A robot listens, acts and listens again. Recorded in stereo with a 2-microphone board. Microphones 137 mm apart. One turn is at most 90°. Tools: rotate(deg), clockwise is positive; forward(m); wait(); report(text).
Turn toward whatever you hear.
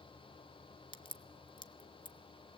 rotate(-35)
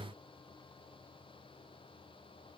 wait()
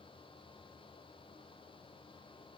report("I heard a crack, but can't make it out now. It was about straight ahead or 110° left.")